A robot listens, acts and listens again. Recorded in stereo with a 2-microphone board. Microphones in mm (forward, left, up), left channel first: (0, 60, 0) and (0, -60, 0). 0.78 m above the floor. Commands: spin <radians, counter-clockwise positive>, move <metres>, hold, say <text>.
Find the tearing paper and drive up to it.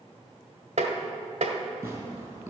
spin -0.26
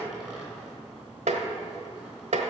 hold
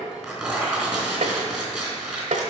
move 1.0
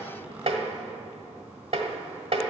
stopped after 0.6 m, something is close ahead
hold
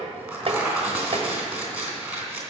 say Something is in my way. I am facing the tearing paper but have not reached it.